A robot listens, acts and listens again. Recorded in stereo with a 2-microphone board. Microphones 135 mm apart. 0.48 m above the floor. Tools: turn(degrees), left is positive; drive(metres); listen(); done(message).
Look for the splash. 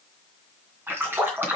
turn(degrees=-15)
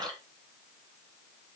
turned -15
turn(degrees=-150)
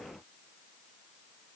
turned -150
done("I heard a splash from this way, but can't make it out now.")